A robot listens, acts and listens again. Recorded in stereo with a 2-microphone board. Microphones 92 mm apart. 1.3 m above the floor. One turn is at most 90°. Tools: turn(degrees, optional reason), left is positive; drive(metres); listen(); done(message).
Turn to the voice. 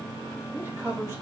turn(degrees=-30, reason="The man speaking: about 30° right or 150° right.")
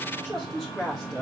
done("Found it: a man speaking, straight ahead.")